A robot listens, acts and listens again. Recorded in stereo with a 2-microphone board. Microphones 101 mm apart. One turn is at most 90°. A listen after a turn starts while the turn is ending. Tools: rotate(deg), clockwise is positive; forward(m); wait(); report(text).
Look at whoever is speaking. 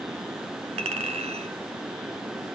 wait()
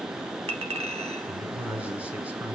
rotate(30)
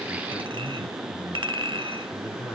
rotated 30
rotate(-25)
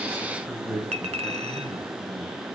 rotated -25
rotate(10)
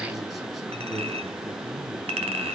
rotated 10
report("Facing the man speaking, over 4 m away.")